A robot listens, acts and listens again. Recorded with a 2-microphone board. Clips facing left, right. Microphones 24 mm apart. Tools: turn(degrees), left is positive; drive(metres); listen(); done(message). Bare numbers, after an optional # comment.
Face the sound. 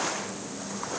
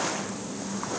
listen()
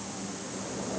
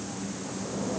listen()
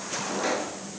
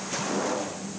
# The pop: about 65° left or 115° left.
turn(65)
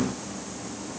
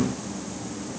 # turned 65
listen()
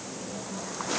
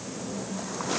done("I heard a pop, but can't make it out now. It was about straight ahead or 50° left.")